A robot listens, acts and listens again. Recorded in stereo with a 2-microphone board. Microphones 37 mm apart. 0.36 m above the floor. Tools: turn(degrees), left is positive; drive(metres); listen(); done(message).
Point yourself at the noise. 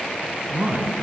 turn(degrees=-70)
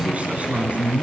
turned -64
turn(degrees=-45)
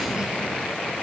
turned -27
turn(degrees=-20)
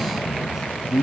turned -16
turn(degrees=-25)
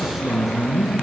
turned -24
done("Found it: a man speaking, straight ahead.")